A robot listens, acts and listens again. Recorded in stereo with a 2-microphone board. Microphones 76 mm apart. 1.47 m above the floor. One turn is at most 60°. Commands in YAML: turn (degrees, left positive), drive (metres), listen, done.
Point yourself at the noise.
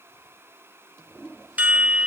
turn: -20
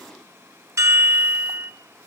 turn: -60
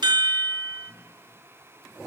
turn: -60
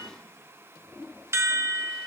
turn: -35
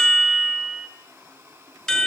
done: "Facing the chime."